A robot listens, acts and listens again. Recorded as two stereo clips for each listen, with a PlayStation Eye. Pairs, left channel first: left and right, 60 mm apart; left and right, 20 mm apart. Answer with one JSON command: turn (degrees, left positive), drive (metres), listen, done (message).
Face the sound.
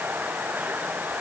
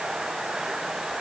{"listen": true}
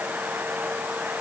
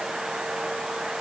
{"listen": true}
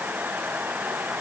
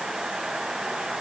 {"done": "I can't make out anything."}